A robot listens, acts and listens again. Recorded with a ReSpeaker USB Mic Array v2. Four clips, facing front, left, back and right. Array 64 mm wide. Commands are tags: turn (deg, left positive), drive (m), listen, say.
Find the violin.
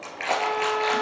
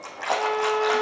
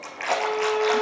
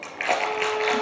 <turn deg="45"/>
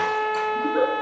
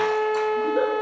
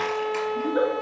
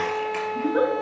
<turn deg="20"/>
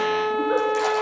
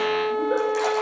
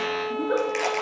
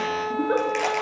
<say>Found it: a violin, straight ahead.</say>